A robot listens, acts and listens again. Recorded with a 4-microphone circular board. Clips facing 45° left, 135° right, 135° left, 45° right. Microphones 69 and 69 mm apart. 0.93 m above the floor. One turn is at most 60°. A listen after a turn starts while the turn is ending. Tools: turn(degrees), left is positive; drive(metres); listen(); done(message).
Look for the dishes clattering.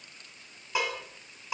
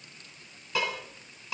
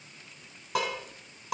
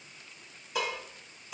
turn(degrees=60)
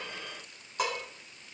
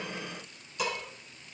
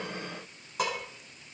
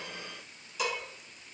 turn(degrees=60)
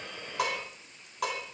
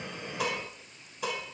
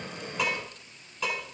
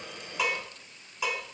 turn(degrees=35)
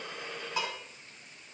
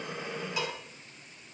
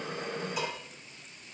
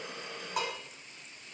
turn(degrees=-10)
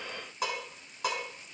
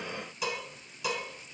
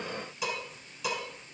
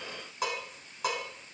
done("Found it: dishes clattering, straight ahead.")